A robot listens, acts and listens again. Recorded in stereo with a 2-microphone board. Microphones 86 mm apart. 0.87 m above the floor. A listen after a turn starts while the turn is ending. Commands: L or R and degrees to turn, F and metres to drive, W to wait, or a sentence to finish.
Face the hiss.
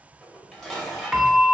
W
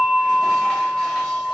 W
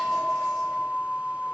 I can't make out a hiss, only a bell and dishes clattering.